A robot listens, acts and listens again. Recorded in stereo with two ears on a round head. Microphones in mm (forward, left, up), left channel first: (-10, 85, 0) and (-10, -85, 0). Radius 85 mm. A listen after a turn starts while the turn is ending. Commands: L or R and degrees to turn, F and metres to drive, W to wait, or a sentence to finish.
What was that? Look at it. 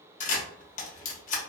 L45
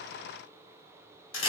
L85
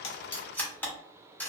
L10
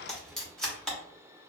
Facing the camera shutter.